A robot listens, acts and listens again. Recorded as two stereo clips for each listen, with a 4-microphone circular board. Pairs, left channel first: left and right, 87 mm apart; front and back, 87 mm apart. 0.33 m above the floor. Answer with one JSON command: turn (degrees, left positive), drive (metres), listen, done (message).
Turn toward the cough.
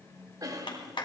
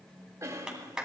{"turn": -130}
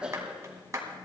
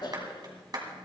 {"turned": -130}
{"turn": -10}
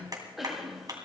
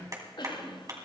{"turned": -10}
{"done": "Facing the cough."}